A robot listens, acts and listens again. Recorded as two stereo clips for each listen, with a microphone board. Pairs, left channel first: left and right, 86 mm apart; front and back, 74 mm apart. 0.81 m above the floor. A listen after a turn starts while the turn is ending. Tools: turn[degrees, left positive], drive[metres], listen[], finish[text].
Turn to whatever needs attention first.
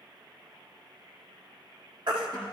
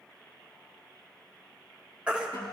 Thought: The baby crying: 105° right.
Action: turn[-105]
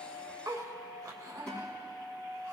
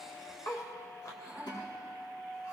Action: listen[]
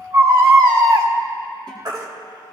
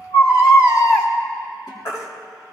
Thought: The baby crying is now 45° right.
Action: turn[-45]
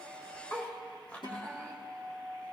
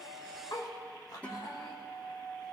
Action: listen[]
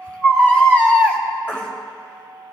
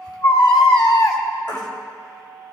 Thought: The baby crying is now 15° left.
Action: turn[15]
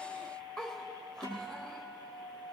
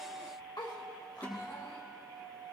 Action: listen[]
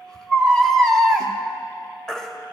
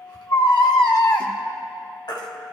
Action: finish[Found it: a baby crying, straight ahead.]